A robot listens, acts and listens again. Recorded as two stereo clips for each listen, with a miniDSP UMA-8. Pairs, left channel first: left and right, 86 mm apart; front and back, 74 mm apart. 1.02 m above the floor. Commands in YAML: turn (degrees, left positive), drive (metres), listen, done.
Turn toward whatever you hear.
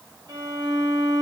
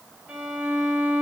turn: -105
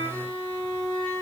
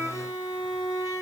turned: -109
done: "Found it: a violin, straight ahead, 1 to 2 m away."